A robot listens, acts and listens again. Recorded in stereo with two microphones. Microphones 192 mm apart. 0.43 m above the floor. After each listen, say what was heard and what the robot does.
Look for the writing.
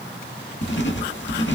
The writing: about 70° left or 110° left. Turn 70° left.
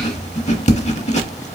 So it is at 35° left. Turn 35° left.
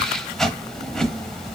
Facing the writing.